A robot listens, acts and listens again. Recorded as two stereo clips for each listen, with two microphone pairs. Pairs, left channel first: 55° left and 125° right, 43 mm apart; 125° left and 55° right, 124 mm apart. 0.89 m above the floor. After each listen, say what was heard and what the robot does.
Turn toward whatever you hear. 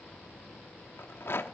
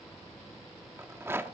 The rattle: 20° left. Turn 20° left.
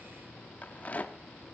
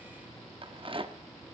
Facing the rattle.